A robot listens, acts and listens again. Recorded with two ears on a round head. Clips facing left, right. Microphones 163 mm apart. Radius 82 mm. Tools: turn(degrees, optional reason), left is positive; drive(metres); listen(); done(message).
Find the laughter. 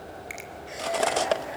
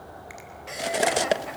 turn(degrees=-65, reason="The laughter: about 65° right or 115° right.")
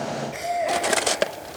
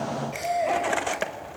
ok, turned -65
done("Found it: laughter, straight ahead, over 4 m away.")